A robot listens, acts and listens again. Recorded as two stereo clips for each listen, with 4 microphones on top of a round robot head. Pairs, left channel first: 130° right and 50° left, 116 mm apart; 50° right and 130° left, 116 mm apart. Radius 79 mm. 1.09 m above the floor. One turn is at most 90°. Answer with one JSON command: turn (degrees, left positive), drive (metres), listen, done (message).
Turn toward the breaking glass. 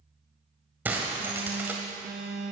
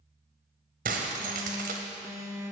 {"turn": 90}
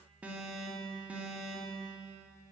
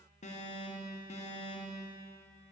{"turn": 35}
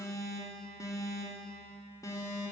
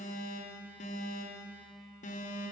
{"done": "Facing where the breaking glass came from. I can't hear it now."}